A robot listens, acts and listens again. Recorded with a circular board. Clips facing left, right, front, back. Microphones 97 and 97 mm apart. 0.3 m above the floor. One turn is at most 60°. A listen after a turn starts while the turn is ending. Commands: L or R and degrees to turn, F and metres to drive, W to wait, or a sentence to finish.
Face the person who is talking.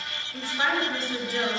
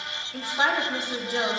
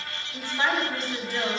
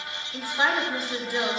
R60
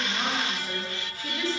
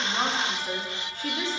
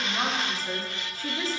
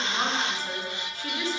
R35
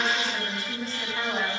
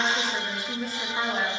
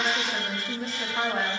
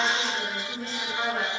R15
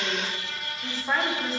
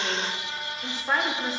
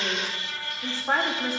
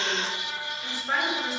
Facing the woman speaking, 2 to 4 m away.